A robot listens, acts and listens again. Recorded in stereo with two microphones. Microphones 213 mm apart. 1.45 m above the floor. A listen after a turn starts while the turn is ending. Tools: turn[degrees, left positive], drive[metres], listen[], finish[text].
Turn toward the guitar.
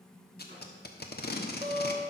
Action: turn[-30]
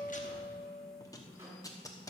Thought: So it is at 20° left.
Action: turn[20]
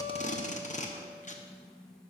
Action: listen[]
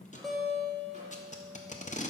Action: finish[Found it: a guitar, straight ahead, 1 to 2 m away.]